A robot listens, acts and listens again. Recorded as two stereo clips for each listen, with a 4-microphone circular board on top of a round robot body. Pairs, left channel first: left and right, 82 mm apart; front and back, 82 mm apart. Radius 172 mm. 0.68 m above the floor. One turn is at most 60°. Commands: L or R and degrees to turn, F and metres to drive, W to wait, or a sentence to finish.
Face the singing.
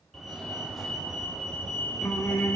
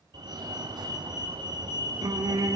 L60
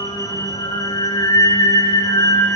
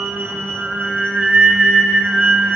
L60
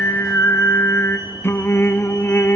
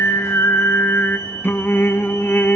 L45
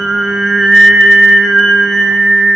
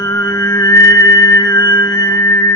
R10
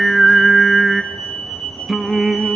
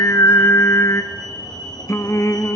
Facing the singing.